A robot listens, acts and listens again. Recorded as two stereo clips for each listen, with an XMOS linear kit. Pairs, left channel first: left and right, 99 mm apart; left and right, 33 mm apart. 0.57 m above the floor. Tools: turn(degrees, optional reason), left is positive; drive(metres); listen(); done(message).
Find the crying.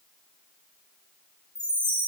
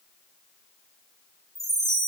listen()
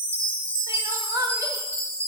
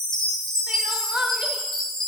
turn(degrees=-35, reason="The crying: about 35° right or 145° right.")
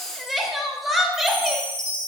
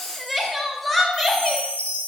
done("Found it: crying, straight ahead.")